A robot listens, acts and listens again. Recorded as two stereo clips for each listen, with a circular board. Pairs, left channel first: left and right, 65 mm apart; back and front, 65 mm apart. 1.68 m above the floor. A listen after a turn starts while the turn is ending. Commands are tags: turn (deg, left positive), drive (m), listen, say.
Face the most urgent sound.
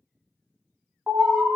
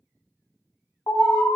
<turn deg="-165"/>
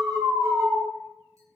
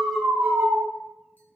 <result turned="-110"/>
<turn deg="-55"/>
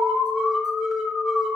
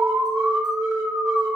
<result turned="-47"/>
<say>Facing the alarm, 1 to 2 m away.</say>